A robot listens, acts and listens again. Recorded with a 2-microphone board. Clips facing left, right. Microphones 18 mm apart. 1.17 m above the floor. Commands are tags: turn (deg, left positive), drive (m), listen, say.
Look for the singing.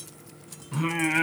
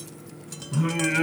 <turn deg="55"/>
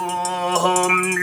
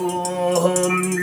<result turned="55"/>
<turn deg="60"/>
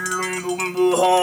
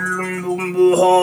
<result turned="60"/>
<say>Found it: singing, straight ahead.</say>